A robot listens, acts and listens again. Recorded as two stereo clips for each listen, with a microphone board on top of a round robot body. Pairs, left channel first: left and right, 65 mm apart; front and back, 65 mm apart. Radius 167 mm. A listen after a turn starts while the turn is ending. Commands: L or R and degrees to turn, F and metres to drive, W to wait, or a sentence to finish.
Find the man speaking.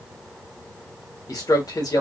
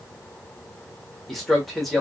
L90
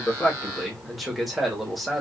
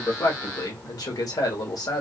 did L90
Facing the man speaking.